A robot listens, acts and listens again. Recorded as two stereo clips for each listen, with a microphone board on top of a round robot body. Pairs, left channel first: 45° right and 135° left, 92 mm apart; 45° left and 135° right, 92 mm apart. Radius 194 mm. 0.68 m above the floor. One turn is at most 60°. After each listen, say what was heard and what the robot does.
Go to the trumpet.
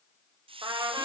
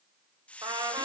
The trumpet: straight behind. Turn 60° left.
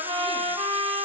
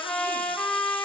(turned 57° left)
The trumpet is now 120° left. Turn 60° left.
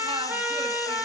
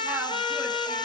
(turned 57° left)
The trumpet is now 65° left. Turn 60° left.
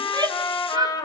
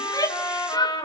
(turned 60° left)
Drive 1.0 m forward.
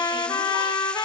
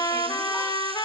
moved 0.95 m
Drive 1.0 m forward.
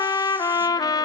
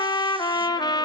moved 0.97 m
Drive 1.0 m forward.
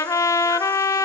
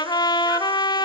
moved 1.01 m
The trumpet is now 10° left. Turn 10° left.
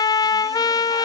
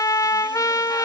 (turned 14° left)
Drive 1.0 m forward.
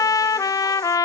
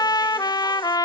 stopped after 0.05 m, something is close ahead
Arrived at the trumpet, straight ahead.